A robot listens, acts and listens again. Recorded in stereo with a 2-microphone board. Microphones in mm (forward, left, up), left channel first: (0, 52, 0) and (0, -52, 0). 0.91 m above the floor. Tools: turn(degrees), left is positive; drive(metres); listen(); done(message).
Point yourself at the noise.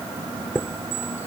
turn(degrees=20)
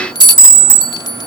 turn(degrees=140)
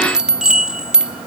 done("Facing the chime.")